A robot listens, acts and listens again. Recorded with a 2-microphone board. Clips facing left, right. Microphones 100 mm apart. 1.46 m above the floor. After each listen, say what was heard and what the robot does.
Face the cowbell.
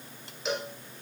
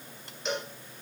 Turn 30° left.
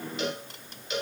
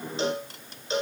So it is at 30° right. Turn 30° right.
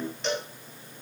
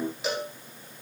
Found it: a cowbell, straight ahead, 1 to 2 m away.